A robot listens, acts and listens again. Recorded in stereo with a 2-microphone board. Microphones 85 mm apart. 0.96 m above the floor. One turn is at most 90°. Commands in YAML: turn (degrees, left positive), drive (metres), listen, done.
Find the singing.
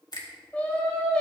turn: 30
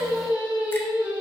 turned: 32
turn: -25
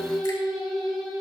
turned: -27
done: "Found it: singing, straight ahead, over 4 m away."